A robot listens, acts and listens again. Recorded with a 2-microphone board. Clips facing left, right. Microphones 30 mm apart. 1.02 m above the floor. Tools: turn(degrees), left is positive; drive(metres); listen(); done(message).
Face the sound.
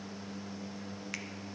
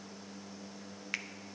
turn(degrees=-20)
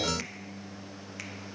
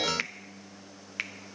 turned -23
turn(degrees=-140)
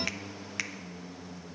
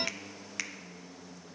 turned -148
turn(degrees=10)
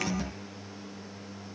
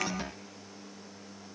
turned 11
listen()
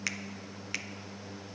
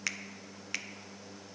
done("Found it: a finger snap, straight ahead, under 1 m away.")